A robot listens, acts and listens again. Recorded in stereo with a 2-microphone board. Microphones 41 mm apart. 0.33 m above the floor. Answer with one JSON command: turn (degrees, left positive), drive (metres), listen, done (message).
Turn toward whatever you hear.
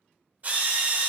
{"turn": -40}
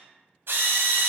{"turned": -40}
{"turn": -95}
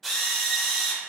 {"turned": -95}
{"done": "Found it: a drill, straight ahead, under 1 m away."}